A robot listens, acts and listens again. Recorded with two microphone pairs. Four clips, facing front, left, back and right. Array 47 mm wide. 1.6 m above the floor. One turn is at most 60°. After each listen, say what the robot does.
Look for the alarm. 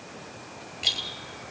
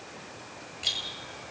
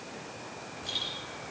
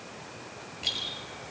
Keep listening.
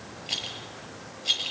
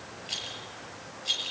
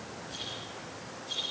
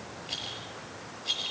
Keep listening.
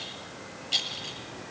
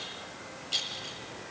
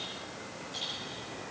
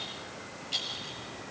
I can't make out an alarm to turn to.